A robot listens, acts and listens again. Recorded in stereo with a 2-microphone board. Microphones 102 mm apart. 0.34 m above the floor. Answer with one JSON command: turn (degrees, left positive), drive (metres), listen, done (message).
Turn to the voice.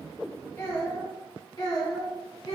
{"turn": 40}
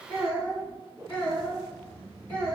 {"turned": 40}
{"turn": 15}
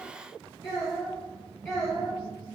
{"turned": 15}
{"done": "Facing the child speaking."}